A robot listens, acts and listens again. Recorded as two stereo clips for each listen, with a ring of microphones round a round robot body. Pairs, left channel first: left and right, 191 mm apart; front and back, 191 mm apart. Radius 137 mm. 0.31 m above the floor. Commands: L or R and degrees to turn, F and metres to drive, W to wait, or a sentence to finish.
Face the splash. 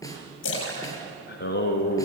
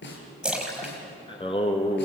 L95
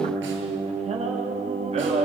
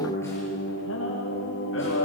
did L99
Facing where the splash came from. I can't hear it now.